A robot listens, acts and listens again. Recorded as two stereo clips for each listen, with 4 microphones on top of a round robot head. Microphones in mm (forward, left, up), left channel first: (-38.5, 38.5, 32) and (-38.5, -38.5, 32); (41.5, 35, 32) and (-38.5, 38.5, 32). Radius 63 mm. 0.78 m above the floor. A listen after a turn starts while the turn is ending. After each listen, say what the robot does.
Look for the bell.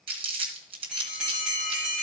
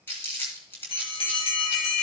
Found it: a bell, straight ahead.